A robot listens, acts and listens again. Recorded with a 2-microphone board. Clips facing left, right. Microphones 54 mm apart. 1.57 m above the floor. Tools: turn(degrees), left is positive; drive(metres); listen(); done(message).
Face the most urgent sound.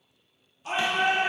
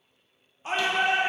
turn(degrees=-30)
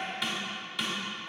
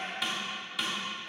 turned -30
done("Found it: a shout, straight ahead.")